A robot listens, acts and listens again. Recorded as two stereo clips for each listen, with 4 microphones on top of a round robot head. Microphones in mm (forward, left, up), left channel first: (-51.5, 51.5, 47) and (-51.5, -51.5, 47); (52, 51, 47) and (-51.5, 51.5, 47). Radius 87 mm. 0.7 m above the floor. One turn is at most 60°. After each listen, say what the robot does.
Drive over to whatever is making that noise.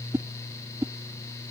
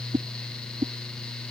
Turn 60° right.
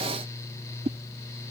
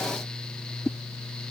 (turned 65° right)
Turn 60° right.
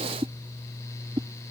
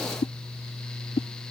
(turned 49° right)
Turn 40° right.
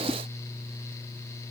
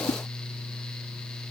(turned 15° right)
Turn 25° right.
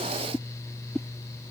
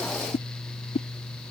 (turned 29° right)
Drive 1.0 m forward.
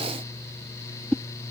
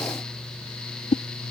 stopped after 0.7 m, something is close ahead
I am next to the whoosh.